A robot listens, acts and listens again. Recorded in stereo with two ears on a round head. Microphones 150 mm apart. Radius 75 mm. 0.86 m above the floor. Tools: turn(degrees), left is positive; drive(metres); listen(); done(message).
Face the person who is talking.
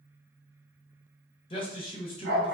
turn(degrees=30)
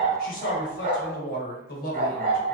turn(degrees=115)
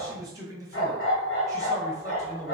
turn(degrees=-20)
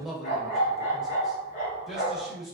done("Found it: a man speaking, straight ahead, under 1 m away.")